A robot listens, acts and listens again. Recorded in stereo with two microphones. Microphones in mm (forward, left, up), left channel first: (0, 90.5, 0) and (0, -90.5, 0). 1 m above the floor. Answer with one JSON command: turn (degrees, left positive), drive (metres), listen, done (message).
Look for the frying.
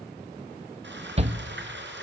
{"turn": -90}
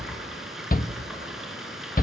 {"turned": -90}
{"done": "Facing the frying, over 4 m away."}